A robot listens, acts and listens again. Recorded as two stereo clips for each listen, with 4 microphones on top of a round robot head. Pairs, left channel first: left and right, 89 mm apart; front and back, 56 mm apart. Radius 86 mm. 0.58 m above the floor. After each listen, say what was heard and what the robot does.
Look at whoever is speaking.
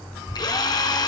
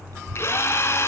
The child speaking: 170° left. Turn 170° left.
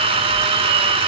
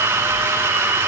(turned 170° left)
Keep listening.
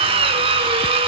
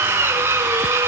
Keep listening.
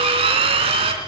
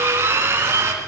Facing where the child speaking came from. I can't hear it now.